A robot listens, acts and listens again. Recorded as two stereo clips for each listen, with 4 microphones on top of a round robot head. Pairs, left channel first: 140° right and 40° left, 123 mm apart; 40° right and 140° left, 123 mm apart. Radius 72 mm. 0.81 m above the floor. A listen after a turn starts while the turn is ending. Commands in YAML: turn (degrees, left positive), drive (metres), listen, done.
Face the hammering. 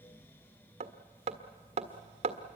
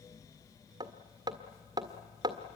turn: 80
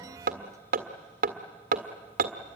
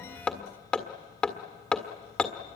turn: 40
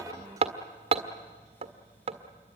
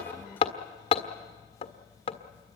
done: "Found it: hammering, straight ahead, 1 to 2 m away."